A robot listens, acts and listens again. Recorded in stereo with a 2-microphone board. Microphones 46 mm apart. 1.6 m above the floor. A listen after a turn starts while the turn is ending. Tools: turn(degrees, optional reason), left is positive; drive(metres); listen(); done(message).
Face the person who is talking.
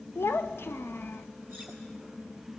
turn(degrees=55, reason="The child speaking: about 55° left or 125° left.")
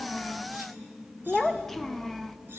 done("Found it: a child speaking, straight ahead, under 1 m away.")